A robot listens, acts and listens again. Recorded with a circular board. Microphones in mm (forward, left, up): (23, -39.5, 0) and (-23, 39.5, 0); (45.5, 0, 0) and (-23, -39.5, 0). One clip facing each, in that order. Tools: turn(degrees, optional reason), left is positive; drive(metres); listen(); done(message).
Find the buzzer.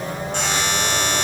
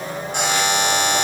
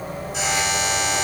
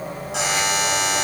turn(degrees=-160, reason="The buzzer: 160° right.")
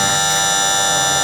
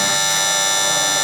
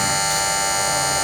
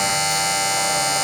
turn(degrees=-10, reason="The buzzer is now 10° right.")
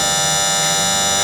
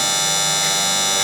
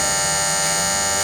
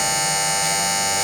done("Found it: a buzzer, straight ahead, 2 to 4 m away.")